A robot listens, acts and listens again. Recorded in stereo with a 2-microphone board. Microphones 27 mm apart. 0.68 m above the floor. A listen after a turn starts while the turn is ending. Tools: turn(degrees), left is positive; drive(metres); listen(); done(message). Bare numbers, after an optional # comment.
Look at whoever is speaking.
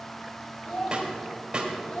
# The child speaking: about 75° left or 105° left.
turn(75)
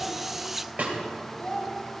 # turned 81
# So it is at 25° left.
turn(25)
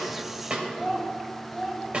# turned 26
done("Found it: a child speaking, straight ahead, 2 to 4 m away.")